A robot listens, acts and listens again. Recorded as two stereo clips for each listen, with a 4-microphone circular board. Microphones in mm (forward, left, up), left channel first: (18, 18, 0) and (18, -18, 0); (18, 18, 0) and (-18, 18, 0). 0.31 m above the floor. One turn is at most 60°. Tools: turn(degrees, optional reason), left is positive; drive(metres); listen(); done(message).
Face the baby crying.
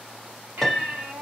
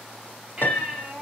turn(degrees=-60, reason="The baby crying: 110° right.")
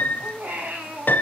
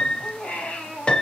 turn(degrees=-60, reason="The baby crying is now 60° right.")
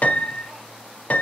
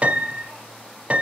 listen()
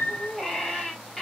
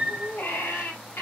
done("Found it: a baby crying, straight ahead, 2 to 4 m away.")